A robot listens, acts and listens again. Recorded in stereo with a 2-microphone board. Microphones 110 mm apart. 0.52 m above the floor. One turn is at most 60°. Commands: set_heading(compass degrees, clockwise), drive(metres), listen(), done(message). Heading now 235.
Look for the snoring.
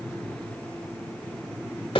listen()
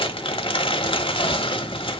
listen()
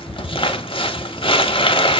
done("I can't make out snoring, only crumpling.")